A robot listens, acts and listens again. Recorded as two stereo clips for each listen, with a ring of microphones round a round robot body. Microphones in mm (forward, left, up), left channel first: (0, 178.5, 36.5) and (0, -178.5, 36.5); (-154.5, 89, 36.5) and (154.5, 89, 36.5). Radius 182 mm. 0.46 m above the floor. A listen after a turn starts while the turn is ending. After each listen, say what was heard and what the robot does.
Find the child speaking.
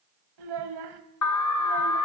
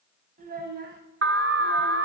The child speaking: 65° right. Turn 65° right.
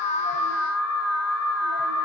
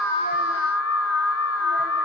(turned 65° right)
Keep listening.
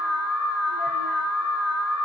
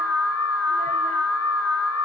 Keep listening.
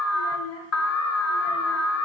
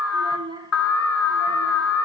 The child speaking is now 75° left. Turn 75° left.
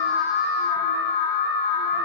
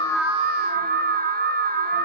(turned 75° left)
Keep listening.
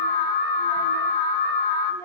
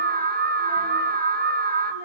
Keep listening.
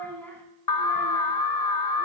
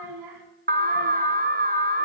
Facing the child speaking.